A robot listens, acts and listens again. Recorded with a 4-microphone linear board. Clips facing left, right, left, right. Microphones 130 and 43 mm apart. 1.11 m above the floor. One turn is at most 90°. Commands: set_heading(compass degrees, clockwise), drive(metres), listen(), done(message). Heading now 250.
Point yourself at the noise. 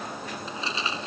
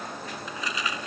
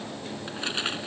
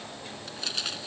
set_heading(220)
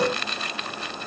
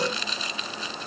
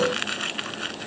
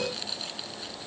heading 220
set_heading(130)
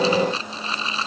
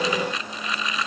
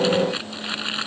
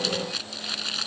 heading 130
set_heading(100)
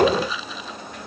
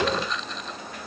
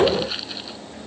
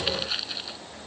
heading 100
done("Facing the crumpling.")